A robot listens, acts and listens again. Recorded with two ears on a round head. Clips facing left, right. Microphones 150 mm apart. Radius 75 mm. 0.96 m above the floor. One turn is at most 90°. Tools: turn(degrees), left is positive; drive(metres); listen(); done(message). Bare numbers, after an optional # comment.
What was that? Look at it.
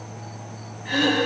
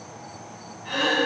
# The throat clearing: about 15° left or 165° left.
turn(15)
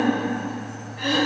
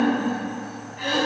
done("Found it: throat clearing, straight ahead, 2 to 4 m away.")